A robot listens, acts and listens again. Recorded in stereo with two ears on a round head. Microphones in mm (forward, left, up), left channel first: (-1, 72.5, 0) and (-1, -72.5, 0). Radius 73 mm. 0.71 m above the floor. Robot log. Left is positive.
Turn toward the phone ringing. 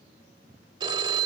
note: The phone ringing: about 30° right or 150° right.
cmd yaw -30
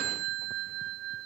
note: So it is at 125° right.
cmd yaw -125
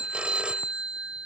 end: Facing the phone ringing.